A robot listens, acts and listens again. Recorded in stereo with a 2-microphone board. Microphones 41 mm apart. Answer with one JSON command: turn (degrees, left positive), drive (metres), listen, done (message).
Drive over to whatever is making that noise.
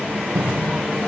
{"turn": -90}
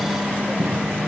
{"drive": 1.0}
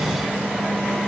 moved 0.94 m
{"listen": true}
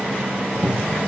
{"drive": 1.0}
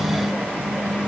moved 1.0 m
{"listen": true}
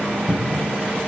{"turn": -10}
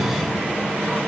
{"drive": 1.0}
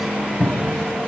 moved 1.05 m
{"drive": 1.0}
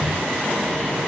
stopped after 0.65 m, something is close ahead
{"turn": 10}
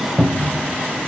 {"done": "I am next to the cupboard door."}